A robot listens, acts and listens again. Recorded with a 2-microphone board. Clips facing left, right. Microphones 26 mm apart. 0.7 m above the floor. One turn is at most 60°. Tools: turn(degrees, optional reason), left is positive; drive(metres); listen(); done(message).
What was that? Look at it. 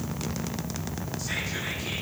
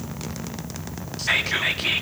turn(degrees=-60, reason="The whispering: about 60° right or 120° right.")
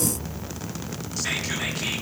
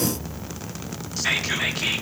turn(degrees=-20, reason="So it is at 20° right.")
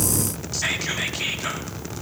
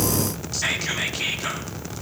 done("Facing the whispering.")